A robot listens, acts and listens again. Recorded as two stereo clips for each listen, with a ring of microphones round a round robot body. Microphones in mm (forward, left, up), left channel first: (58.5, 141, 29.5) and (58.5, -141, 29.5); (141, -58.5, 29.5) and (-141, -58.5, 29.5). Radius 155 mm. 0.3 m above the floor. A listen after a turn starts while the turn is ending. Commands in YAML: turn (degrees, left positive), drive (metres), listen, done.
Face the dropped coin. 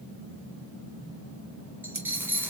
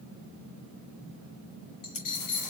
done: "Found it: a dropped coin, straight ahead."